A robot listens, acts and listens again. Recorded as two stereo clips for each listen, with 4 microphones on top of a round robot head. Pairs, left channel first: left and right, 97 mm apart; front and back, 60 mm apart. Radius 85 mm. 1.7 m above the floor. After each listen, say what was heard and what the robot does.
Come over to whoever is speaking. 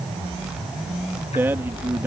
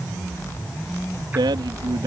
The man speaking: 165° right. Turn 165° right.
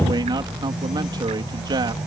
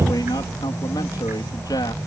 The man speaking is now 40° right. Turn 40° right.
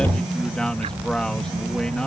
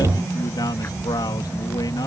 Keep listening.
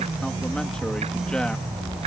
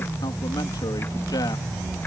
Keep listening.
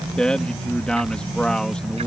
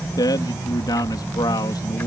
The man speaking is now 10° left. Turn 10° left.
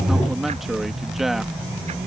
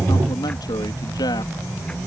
Drive 1.0 m forward.
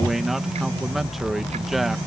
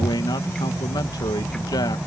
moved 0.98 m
Drive 1.0 m forward.
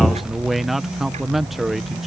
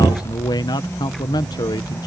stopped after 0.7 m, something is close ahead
Arrived at the man speaking, straight ahead.